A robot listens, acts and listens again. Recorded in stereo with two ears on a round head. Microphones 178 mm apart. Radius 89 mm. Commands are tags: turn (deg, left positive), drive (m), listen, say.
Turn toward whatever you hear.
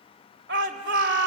<turn deg="-60"/>
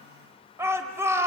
<turn deg="-15"/>
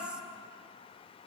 <listen/>
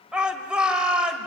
<say>Facing the shout, 2 to 4 m away.</say>